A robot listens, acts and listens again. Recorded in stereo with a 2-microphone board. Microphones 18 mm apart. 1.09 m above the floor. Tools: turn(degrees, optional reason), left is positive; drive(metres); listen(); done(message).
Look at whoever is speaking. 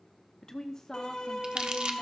turn(degrees=30, reason="The woman speaking: about 30° left or 150° left.")
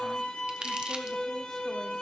listen()
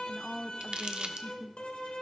done("Facing the woman speaking.")